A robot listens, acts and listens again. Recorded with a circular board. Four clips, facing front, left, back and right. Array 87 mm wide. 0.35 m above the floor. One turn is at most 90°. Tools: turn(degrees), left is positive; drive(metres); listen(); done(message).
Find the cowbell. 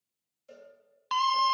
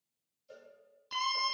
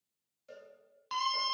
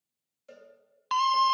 turn(degrees=-90)
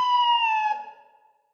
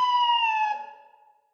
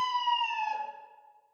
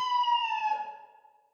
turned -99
turn(degrees=-10)
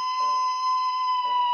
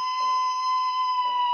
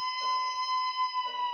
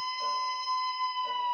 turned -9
listen()
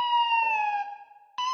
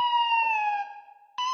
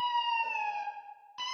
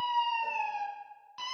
done("I heard a cowbell from this way, but can't make it out now.")